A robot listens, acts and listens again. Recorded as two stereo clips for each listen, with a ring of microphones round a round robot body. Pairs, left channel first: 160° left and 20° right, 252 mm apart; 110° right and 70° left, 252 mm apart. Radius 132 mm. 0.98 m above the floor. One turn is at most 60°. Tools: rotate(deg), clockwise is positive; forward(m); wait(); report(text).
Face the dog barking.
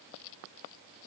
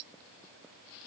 wait()
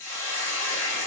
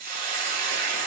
wait()
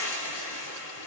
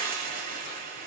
report("I can't make out a dog barking, only a hiss.")